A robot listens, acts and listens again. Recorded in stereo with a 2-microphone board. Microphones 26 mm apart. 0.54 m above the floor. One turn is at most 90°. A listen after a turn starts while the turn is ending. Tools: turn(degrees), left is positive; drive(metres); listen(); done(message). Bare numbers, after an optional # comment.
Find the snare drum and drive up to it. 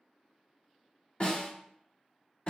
# The snare drum: about 50° left or 130° left.
turn(50)
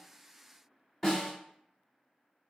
# So it is at 15° left.
turn(15)
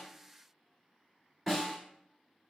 drive(1.0)
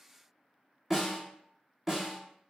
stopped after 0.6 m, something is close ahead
done("Arrived at the snare drum, straight ahead.")